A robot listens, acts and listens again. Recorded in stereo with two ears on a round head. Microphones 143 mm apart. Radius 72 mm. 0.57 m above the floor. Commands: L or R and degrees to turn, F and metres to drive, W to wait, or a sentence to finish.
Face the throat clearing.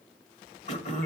L45
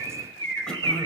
Found it: throat clearing, straight ahead, 1 to 2 m away.